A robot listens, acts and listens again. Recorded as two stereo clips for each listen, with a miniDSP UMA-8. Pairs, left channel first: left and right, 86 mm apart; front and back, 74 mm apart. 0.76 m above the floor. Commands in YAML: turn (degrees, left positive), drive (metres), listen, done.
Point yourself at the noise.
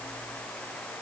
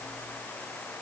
listen: true
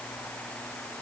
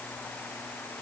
listen: true
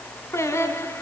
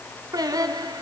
turn: 150
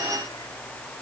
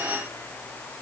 listen: true
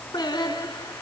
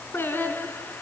turn: 60
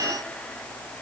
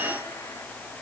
listen: true
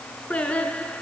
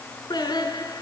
turn: 15
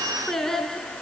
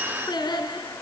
done: "Facing the singing, 2 to 4 m away."